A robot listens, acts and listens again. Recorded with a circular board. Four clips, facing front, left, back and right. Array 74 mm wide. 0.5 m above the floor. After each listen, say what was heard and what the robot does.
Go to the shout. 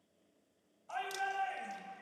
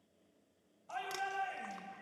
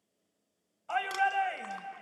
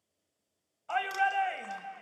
The shout: 125° right. Turn 125° right.
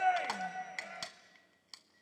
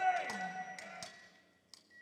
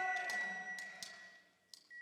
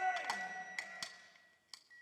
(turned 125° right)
The shout is now 20° left. Turn 20° left.
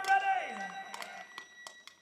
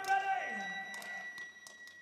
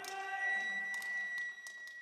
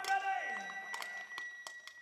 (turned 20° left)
Drive 1.0 m forward.
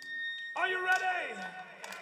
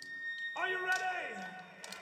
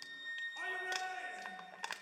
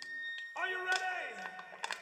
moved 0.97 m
Drive 1.0 m forward.
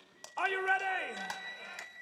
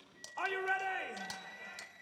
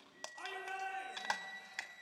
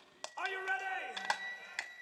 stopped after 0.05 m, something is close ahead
Arrived at the shout, straight ahead.